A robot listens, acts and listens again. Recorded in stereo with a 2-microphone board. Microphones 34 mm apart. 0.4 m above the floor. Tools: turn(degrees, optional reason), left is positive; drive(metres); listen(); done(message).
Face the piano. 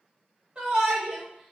listen()
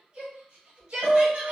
turn(degrees=-30, reason="The piano: about 30° right or 150° right.")
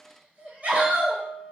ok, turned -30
done("Found it: a piano, straight ahead.")